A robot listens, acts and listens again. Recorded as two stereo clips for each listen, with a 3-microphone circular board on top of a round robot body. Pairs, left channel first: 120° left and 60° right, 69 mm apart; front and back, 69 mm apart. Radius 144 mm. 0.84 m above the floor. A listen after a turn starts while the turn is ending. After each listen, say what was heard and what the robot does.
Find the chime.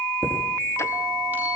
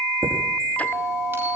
The chime: 125° right. Turn 125° right.
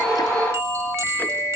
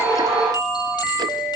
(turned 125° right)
Keep listening.
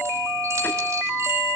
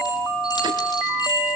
Keep listening.
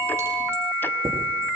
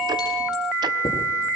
The chime is now 10° right. Turn 10° right.
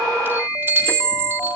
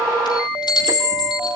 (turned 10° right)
Facing the chime, over 4 m away.